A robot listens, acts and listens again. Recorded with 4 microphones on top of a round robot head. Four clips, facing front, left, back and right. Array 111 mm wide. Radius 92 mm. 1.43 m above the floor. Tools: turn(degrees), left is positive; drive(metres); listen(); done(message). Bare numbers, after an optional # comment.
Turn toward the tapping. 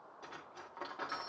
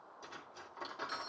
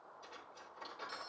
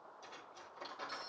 listen()
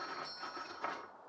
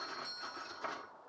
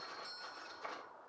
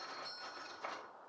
listen()
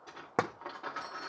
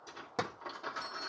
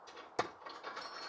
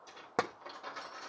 # The tapping: 25° right.
turn(-25)
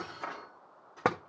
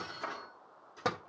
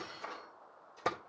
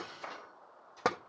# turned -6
# The tapping is now 20° right.
turn(-20)
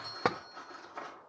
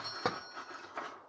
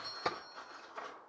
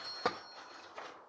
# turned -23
done("Found it: tapping, straight ahead, under 1 m away.")